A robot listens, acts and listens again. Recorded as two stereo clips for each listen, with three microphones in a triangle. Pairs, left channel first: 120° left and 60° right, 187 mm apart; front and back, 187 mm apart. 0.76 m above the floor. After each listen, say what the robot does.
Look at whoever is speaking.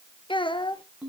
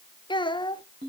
Turn 60° left.
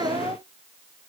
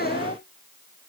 Found it: a child speaking, straight ahead.